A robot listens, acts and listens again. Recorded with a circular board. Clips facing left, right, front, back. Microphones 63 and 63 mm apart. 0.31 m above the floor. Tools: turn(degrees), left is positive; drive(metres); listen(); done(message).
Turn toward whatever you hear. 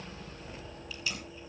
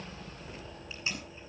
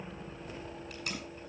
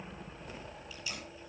turn(degrees=-30)
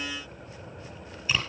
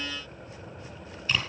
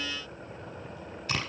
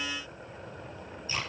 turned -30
done("Facing the tape being pulled, over 4 m away.")